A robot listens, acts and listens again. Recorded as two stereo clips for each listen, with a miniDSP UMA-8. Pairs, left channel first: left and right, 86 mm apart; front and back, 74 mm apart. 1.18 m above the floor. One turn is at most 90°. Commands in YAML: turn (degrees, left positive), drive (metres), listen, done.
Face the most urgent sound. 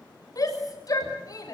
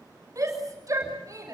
turn: 90
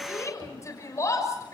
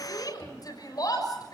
turn: 35
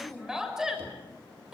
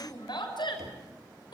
turn: -10
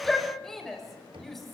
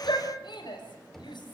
done: "Found it: a shout, straight ahead."